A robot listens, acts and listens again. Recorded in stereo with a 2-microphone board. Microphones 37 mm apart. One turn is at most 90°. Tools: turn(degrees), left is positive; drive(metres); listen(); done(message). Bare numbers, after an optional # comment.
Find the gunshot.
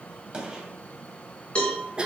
# The gunshot: about 20° right or 160° right.
turn(-20)
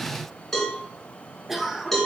listen()
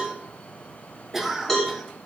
done("I heard a gunshot, but can't make it out now. It was about straight ahead or 140° right.")